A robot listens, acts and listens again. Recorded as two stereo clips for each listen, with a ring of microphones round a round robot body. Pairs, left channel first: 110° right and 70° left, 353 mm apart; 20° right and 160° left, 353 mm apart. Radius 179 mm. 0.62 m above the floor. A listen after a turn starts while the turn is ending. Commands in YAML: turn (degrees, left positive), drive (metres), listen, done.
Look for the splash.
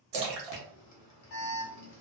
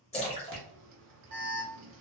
turn: 50
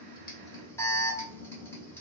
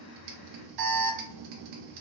done: "I heard a splash from this way, but can't make it out now."